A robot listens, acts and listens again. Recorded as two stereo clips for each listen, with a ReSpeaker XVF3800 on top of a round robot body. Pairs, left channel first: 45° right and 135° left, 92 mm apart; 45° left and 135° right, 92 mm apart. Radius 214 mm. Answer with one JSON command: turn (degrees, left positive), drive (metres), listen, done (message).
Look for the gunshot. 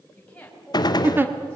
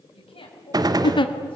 {"turn": -90}
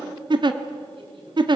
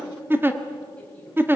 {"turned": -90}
{"done": "Facing where the gunshot came from. I can't hear it now."}